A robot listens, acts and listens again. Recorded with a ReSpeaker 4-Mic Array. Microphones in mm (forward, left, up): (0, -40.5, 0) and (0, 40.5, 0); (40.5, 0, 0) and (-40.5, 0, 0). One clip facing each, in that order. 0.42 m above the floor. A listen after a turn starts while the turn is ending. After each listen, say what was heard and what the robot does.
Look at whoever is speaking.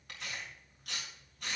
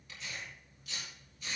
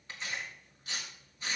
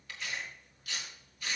Keep listening.
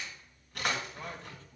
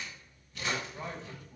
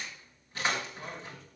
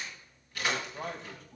The man speaking: 165° left. Turn 165° left.
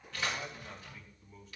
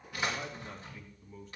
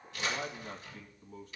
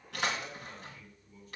Found it: a man speaking, straight ahead, 2 to 4 m away.